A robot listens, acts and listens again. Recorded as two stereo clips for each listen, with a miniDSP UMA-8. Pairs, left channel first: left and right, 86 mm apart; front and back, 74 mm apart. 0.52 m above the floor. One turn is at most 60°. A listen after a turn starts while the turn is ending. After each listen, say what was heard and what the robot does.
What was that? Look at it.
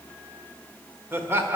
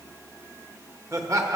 The laughter: 145° right. Turn 60° right.
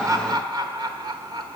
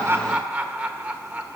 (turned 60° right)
The laughter is now 110° right. Turn 60° right.
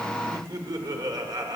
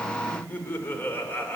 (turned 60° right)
The laughter is now 60° right. Turn 60° right.
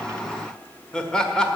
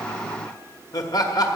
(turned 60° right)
The laughter is now 10° left. Turn 10° left.
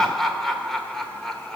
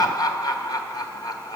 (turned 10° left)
Facing the laughter, 1 to 2 m away.